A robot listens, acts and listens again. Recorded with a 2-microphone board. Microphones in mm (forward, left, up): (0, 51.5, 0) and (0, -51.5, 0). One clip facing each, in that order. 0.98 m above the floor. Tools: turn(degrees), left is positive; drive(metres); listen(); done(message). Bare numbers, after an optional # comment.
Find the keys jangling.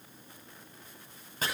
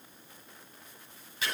listen()
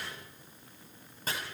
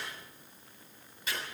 listen()
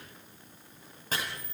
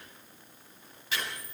turn(-90)
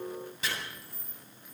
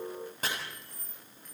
# So it is at 10° left.
turn(10)
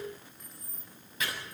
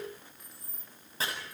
done("Found it: keys jangling, straight ahead.")